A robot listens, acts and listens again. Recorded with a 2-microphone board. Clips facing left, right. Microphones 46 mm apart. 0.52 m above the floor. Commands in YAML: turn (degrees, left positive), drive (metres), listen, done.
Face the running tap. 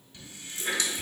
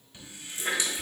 turn: -20
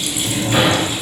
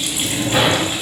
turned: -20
listen: true
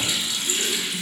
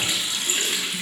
turn: -140
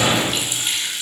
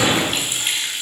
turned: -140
turn: -50
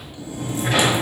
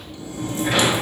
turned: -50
listen: true
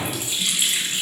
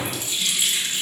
turn: 15
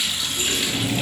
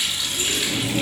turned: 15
done: "Facing the running tap, 1 to 2 m away."